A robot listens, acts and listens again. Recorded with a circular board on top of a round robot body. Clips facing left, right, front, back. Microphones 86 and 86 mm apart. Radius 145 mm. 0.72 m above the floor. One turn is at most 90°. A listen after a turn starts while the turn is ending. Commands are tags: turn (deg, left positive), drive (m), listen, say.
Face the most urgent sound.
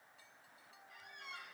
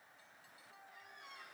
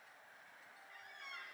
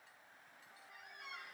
<listen/>
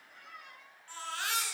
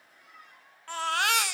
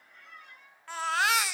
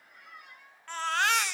<turn deg="-85"/>
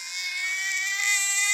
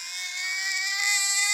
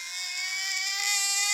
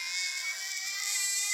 <turn deg="-15"/>
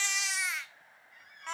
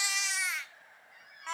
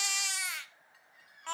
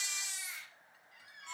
<say>Found it: a baby crying, straight ahead, 1 to 2 m away.</say>